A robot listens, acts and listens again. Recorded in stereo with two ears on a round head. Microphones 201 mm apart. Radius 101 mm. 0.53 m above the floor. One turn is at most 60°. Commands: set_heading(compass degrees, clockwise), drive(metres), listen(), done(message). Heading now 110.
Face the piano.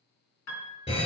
set_heading(50)
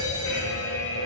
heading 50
listen()
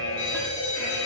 listen()
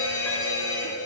done("I heard a piano, but can't make it out now. It was about 5° left or 55° left.")